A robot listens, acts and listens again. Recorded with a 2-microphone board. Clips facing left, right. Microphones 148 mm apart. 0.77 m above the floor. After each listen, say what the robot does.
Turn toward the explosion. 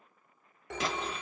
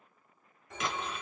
Turn 35° left.
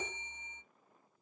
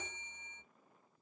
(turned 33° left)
Keep listening.
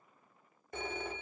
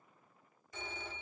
I heard an explosion, but can't make it out now. It was about straight ahead or 110° left.